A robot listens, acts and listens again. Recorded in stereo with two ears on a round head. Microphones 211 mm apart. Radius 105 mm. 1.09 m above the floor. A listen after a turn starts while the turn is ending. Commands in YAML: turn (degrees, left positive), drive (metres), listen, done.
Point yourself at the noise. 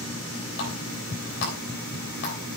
turn: 55
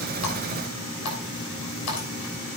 turn: 70
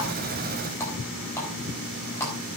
turn: 15
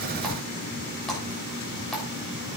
done: "Found it: a running tap, straight ahead, over 4 m away."